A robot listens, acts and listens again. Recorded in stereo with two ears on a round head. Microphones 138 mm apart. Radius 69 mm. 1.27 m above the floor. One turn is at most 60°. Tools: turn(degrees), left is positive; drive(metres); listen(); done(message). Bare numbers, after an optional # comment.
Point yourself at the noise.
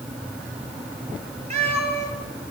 # The cat meowing: about 40° right or 140° right.
turn(-40)
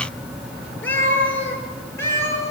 # So it is at 20° left.
turn(20)
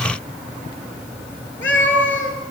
# The cat meowing is now 15° left.
turn(15)
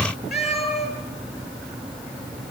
done("Found it: a cat meowing, straight ahead, over 4 m away.")